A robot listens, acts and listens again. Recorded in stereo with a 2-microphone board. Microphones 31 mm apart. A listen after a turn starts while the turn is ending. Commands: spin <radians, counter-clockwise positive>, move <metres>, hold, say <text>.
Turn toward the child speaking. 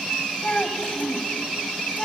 spin 0.70
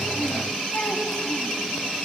hold
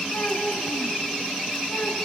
spin 1.83
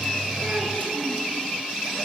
hold
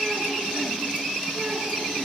hold
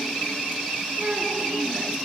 spin -0.44
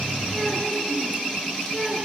say Facing the child speaking, over 4 m away.